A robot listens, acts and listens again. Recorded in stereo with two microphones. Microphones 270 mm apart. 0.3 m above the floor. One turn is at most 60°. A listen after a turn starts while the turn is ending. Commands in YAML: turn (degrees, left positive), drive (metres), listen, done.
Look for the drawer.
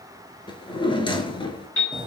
turn: 20
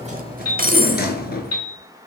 turn: 60
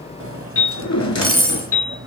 turn: 60
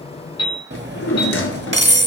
turn: 55
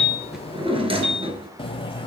turn: -20
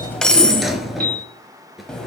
done: "Facing the drawer."